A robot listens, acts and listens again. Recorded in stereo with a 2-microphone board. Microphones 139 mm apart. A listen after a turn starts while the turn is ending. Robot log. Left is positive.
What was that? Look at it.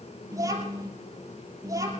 note: The child speaking: about 25° right or 155° right.
cmd yaw -25
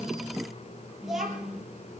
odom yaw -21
end: Found it: a child speaking, straight ahead, over 4 m away.